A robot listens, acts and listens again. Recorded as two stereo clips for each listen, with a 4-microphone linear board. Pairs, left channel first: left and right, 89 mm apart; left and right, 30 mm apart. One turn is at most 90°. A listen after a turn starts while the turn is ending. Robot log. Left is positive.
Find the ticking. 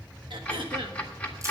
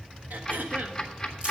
note: The ticking: about 20° left or 160° left.
cmd yaw +20
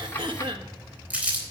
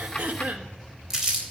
cmd idle
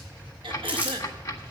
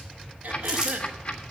note: So it is at 140° left.
cmd yaw +90
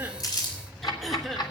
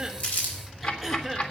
note: The ticking is now 60° left.
cmd yaw +60
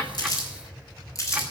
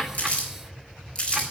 cmd idle
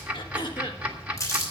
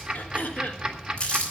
note: The ticking is now 15° right.
cmd yaw -15
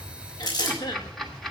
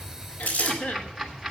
end: Found it: ticking, straight ahead, 1 to 2 m away.